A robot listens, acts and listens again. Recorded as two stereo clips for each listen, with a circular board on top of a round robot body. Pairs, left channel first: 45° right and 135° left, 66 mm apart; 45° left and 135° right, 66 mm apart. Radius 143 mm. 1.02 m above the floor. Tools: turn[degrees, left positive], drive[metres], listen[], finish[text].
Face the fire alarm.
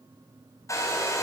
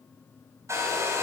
Action: listen[]
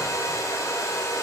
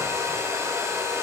Action: listen[]
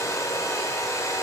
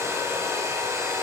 Action: finish[I can't make out a fire alarm, only a hair dryer.]